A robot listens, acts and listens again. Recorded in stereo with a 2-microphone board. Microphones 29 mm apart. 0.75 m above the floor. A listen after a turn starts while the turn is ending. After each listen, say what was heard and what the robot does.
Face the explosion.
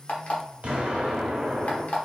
The explosion: about 55° right or 125° right. Turn 55° right.
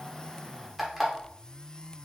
Keep listening.
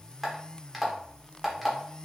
I heard an explosion, but can't make it out now. It was about straight ahead or 70° right.